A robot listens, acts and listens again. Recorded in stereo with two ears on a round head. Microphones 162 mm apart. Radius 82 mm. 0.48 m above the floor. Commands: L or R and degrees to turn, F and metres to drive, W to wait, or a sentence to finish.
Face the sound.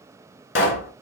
L70
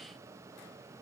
W
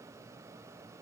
I heard a pop, but can't make it out now. It was about straight ahead or 40° left.